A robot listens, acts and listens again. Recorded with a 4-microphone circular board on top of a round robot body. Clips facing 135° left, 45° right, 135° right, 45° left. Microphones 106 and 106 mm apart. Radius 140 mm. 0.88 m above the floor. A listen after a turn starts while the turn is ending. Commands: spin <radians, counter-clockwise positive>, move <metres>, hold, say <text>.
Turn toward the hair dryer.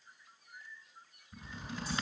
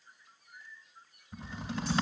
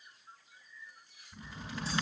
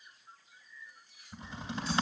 hold
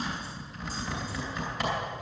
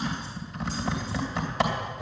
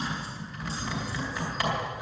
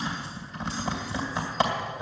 hold
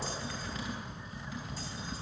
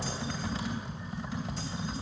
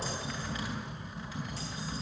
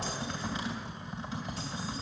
say I can't make out a hair dryer, only typing on a keyboard.